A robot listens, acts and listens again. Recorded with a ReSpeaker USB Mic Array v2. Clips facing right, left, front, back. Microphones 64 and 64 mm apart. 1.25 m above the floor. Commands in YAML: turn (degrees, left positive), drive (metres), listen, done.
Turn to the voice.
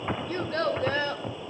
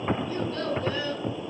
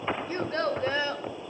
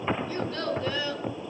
turn: -55
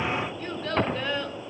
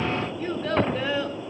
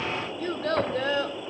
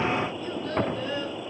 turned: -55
done: "Found it: a child speaking, straight ahead."